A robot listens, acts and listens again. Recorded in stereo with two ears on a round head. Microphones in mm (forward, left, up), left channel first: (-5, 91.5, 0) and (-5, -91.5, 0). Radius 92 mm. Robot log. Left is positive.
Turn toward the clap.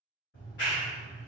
note: The clap: about 55° left or 125° left.
cmd yaw +55
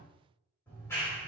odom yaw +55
note: So it is at 15° left.
cmd yaw +15
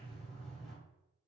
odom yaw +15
end: Facing the clap.